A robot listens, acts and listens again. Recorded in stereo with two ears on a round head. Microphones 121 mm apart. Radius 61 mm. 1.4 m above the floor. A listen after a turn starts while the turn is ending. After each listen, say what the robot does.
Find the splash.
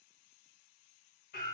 Keep listening.
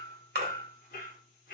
Turn 75° right.
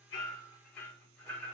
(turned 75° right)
Keep listening.
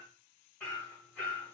I heard a splash, but can't make it out now. It was about straight ahead or 30° right.